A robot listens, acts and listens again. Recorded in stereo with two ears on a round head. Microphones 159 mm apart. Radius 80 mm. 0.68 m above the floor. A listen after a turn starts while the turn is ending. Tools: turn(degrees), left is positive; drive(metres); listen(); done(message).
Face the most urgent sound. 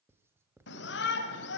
turn(degrees=75)
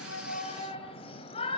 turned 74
turn(degrees=30)
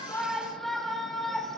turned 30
done("Found it: a shout, straight ahead, 2 to 4 m away.")